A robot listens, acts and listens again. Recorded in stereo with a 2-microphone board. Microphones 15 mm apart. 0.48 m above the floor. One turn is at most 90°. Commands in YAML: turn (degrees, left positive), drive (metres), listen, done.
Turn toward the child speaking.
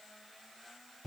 listen: true
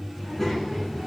turn: 20
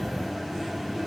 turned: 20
turn: 90
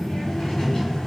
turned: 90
turn: 60
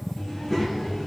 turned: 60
turn: 15
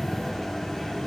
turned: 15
done: "Facing the child speaking, over 4 m away."